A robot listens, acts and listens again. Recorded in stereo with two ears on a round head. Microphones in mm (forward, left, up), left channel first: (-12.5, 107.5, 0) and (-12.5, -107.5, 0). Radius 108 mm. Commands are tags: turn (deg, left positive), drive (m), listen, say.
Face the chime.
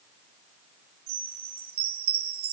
<turn deg="-90"/>
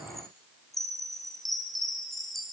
<say>Facing the chime, 2 to 4 m away.</say>